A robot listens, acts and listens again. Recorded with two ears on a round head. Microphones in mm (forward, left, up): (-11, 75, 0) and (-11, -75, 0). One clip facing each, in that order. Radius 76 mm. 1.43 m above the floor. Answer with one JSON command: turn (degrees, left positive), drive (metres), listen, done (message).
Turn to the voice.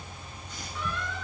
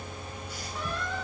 {"listen": true}
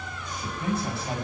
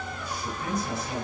{"turn": 30}
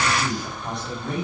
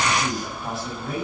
{"done": "Found it: a man speaking, straight ahead, over 4 m away."}